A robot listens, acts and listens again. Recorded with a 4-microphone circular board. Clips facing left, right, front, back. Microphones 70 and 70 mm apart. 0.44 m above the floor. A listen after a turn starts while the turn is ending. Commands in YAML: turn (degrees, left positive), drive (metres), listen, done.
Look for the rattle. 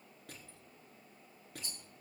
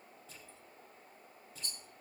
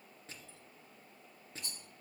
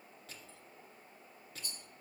turn: 10
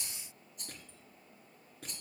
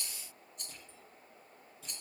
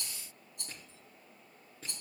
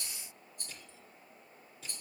done: "Found it: a rattle, straight ahead, 2 to 4 m away."